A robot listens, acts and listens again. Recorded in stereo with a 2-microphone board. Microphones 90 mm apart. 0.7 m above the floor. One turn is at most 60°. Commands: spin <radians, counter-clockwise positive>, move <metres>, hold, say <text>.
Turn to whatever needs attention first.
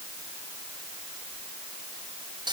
hold
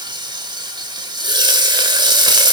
hold
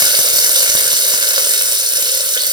say I can't make out anything urgent, only frying.